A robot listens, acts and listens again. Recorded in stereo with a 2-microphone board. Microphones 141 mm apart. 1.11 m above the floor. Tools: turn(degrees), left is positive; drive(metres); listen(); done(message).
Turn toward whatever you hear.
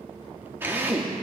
turn(degrees=-15)
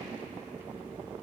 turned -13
listen()
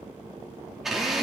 done("Facing the drill, 2 to 4 m away.")